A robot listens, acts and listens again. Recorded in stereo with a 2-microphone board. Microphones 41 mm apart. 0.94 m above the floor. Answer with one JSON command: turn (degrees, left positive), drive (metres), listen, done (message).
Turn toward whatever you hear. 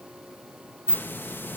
{"turn": 60}
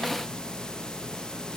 {"turn": 20}
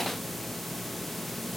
{"done": "Found it: a hiss, straight ahead, under 1 m away."}